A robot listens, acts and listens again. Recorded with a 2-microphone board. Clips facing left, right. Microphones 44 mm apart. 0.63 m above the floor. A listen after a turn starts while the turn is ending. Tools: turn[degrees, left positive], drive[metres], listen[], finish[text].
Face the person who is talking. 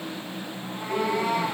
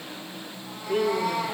Thought: The woman speaking: about 55° right or 125° right.
Action: turn[-55]
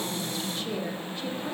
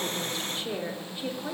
Thought: So it is at 15° right.
Action: turn[-15]
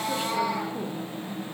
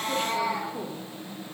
Action: listen[]
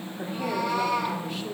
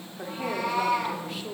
Action: finish[Facing the woman speaking.]